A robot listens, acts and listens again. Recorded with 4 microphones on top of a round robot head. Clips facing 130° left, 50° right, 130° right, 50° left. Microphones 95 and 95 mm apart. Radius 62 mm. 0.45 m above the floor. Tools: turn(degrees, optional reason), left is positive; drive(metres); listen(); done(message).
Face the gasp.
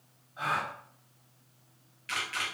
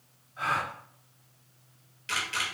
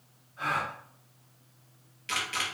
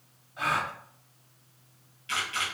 turn(degrees=60, reason="The gasp: 60° left.")
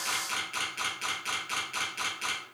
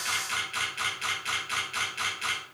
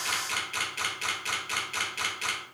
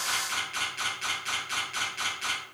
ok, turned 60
done("Facing where the gasp came from. I can't hear it now.")